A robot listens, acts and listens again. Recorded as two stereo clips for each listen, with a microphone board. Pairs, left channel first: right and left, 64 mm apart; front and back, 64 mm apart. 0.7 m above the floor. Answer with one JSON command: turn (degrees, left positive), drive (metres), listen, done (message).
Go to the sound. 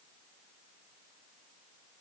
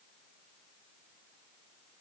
{"listen": true}
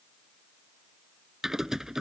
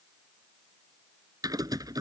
{"turn": 175}
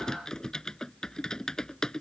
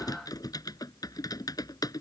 {"turn": -10}
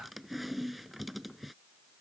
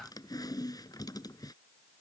{"drive": 1.0}
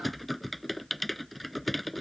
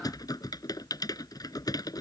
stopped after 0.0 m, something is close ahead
{"done": "Something is in my way. I am facing the typing on a keyboard but have not reached it."}